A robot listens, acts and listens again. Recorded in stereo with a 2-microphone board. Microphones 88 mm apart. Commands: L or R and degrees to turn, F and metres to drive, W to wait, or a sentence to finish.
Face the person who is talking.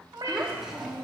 R30
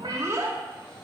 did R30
R145
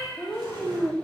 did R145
Found it: a child speaking, straight ahead.